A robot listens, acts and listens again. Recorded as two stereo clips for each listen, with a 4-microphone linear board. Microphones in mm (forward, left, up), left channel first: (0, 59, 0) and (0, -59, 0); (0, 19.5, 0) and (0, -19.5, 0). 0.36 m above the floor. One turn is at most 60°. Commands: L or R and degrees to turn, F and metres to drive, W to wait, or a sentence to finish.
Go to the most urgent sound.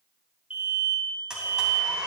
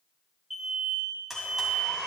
R30
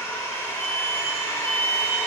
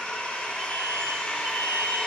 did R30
R60
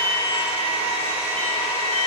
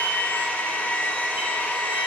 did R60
R60
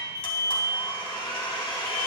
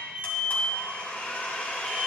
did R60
R30
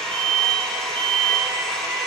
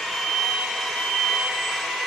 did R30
L15
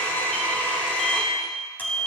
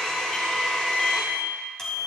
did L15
F1.0
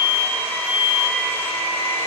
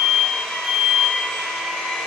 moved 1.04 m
F1.0
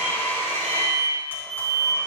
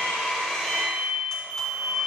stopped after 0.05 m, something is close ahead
Arrived at the alarm, straight ahead.